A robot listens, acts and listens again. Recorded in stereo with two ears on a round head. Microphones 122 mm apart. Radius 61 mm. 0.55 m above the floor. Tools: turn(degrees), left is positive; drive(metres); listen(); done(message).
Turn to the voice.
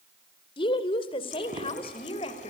turn(degrees=45)
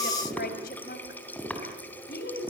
turn(degrees=105)
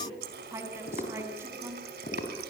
turn(degrees=-15)
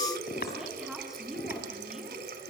done("Found it: a woman speaking, straight ahead, over 4 m away.")